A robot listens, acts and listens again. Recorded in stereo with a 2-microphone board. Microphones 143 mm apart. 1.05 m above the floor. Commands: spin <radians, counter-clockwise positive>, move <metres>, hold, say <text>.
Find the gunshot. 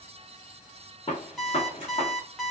spin 0.70
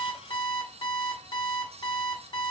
hold
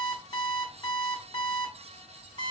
say I heard a gunshot, but can't make it out now. It was about straight ahead or 100° left.